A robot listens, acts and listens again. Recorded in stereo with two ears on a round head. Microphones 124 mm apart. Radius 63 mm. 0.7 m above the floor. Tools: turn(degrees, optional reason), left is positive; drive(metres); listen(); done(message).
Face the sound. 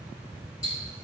turn(degrees=25, reason="The ticking: about 25° left or 155° left.")
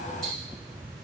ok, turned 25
listen()
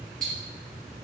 done("Found it: ticking, straight ahead.")